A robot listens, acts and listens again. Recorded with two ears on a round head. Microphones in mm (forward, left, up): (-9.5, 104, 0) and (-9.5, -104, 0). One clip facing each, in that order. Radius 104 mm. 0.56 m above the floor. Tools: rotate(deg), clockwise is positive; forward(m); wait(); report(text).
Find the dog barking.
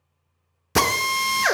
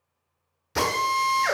wait()
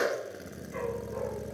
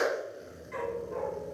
rotate(65)
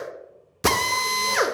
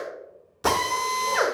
wait()
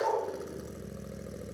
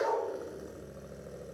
report("Found it: a dog barking, straight ahead, over 4 m away.")